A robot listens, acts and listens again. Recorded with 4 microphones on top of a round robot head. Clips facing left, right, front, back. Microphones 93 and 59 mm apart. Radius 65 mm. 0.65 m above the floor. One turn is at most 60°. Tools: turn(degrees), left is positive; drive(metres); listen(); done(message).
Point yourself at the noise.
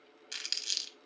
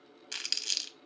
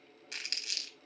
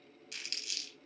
turn(degrees=-55)
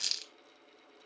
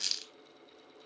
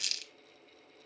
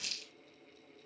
done("Facing the crumpling, under 1 m away.")